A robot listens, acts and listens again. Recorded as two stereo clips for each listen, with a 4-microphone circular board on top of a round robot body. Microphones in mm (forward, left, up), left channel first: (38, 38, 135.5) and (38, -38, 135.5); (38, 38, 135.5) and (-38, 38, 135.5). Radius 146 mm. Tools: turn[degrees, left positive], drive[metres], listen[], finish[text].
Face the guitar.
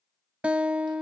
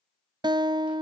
Thought: The guitar: 165° right.
Action: turn[-165]
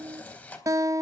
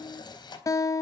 Thought: The guitar is now 45° right.
Action: turn[-45]
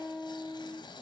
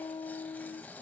Thought: The guitar is now 10° left.
Action: turn[10]
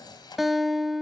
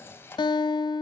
Action: finish[Facing the guitar.]